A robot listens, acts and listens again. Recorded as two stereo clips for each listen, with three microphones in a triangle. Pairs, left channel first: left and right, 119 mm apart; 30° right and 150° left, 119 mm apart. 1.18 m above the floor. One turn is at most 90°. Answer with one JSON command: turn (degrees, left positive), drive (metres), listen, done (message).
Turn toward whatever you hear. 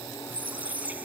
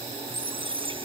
{"turn": -90}
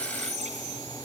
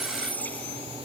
{"turn": -90}
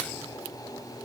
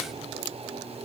{"turn": -15}
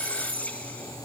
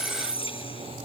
{"turn": 10}
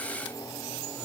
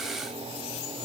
{"listen": true}
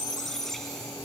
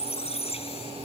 {"done": "Facing the squeak."}